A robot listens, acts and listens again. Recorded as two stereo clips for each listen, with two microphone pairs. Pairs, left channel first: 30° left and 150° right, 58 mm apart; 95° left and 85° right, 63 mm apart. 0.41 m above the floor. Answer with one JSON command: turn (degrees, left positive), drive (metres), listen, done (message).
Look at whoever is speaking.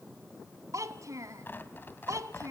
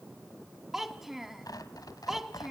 {"turn": -175}
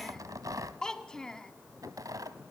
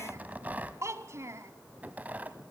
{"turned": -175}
{"turn": -45}
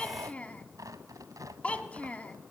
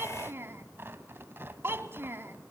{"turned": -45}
{"turn": -35}
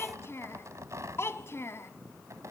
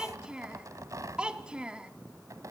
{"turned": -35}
{"turn": -10}
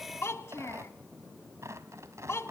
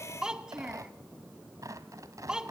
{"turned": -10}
{"turn": -10}
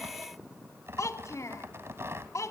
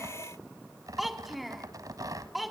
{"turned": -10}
{"done": "Facing the child speaking, 1 to 2 m away."}